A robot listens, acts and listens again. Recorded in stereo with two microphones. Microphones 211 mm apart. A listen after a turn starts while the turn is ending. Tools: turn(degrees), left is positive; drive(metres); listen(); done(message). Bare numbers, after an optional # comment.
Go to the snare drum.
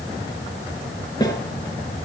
# The snare drum: about 20° left or 160° left.
turn(20)
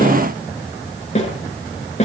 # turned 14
# So it is at 145° left.
turn(145)
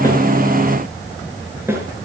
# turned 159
# The snare drum is now 10° right.
turn(-10)
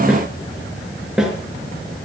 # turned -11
drive(1.0)
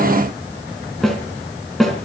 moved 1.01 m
drive(1.0)
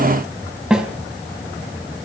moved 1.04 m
drive(1.0)
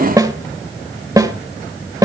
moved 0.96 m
# The snare drum is now 15° right.
turn(-15)
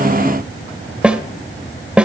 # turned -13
drive(1.0)
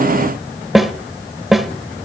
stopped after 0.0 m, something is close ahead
done("Arrived at the snare drum, straight ahead.")